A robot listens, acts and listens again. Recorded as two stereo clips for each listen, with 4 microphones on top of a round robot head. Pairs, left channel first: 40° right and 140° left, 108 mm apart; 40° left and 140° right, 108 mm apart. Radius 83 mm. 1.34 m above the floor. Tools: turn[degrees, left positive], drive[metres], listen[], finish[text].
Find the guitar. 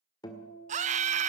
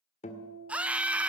Thought: The guitar: 15° left.
Action: turn[15]
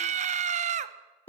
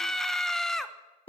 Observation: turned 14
Action: finish[Facing the guitar, 1 to 2 m away.]